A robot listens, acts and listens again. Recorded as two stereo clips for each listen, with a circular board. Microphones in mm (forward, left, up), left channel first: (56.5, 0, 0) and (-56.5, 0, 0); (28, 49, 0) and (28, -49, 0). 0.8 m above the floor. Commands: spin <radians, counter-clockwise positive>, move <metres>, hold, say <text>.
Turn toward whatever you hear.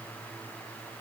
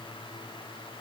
hold
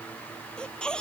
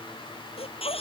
spin 1.40
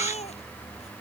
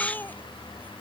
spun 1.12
spin 0.35
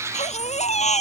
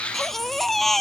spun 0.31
say Facing the baby crying.